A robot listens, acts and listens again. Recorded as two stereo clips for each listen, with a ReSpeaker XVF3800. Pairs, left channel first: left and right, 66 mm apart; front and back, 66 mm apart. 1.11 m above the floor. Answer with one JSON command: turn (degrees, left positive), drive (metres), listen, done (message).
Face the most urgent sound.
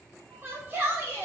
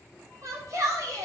{"turn": -145}
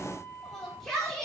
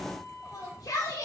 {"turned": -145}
{"done": "Facing the shout, 2 to 4 m away."}